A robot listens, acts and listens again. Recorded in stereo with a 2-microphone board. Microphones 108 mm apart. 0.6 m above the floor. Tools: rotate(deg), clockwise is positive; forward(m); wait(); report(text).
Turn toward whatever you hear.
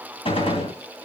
rotate(-60)
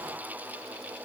wait()
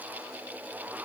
report("I heard a gunshot, but can't make it out now. It was about straight ahead or 60° left.")